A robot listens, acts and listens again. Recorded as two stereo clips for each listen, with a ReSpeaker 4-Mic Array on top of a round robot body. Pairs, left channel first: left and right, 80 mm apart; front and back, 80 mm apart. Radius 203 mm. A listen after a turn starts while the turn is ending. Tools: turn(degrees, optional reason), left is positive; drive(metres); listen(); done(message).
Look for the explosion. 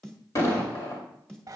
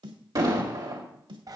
turn(degrees=140, reason="The explosion: 140° left.")
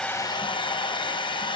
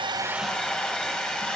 done("I heard an explosion from this way, but can't make it out now.")